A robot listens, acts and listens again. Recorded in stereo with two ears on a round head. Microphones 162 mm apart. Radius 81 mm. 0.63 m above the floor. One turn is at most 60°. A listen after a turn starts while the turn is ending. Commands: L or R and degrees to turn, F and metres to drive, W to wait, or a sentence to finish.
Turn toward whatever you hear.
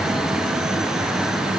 W
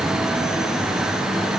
W
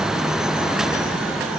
I can't make out anything to turn to.